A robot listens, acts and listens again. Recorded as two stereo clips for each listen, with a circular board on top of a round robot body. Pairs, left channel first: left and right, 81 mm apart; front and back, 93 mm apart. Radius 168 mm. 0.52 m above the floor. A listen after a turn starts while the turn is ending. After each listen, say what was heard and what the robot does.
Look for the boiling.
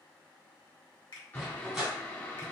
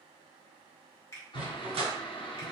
The boiling: 25° left. Turn 25° left.
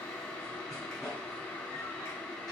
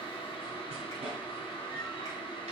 The boiling is now 20° left. Turn 20° left.
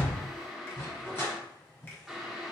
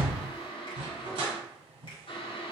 Found it: boiling, straight ahead.